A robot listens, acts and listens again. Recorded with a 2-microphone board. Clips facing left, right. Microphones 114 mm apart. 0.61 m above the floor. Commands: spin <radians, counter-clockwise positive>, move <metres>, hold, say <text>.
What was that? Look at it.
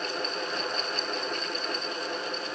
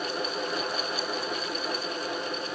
hold
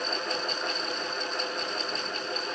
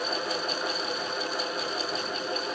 hold
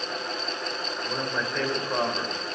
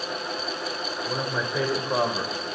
spin -0.26
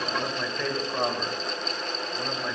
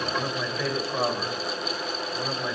spin -0.52
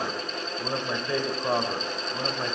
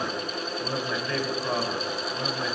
spin 0.44
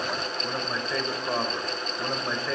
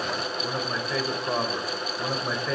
say Found it: a man speaking, straight ahead.